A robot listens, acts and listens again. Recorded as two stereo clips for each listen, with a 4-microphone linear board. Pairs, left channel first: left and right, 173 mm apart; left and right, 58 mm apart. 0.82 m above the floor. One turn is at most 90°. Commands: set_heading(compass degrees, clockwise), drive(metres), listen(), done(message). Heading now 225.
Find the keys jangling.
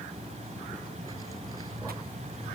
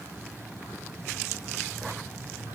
listen()
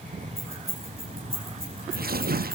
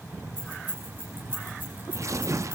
set_heading(260)
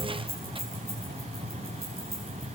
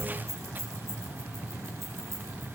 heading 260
set_heading(350)
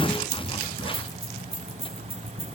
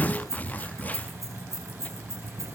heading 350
set_heading(50)
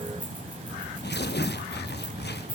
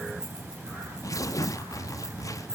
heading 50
listen()
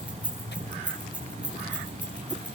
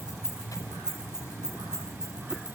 set_heading(60)
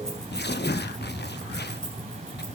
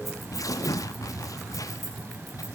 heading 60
listen()
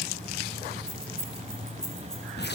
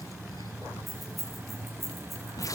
done("Found it: keys jangling, straight ahead, over 4 m away.")